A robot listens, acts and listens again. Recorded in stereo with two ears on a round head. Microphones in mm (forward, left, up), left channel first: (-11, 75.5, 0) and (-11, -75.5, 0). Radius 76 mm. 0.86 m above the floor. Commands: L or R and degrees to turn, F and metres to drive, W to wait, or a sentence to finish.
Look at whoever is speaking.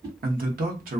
R55
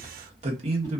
R45
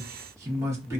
R20
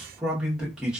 Facing the man speaking, under 1 m away.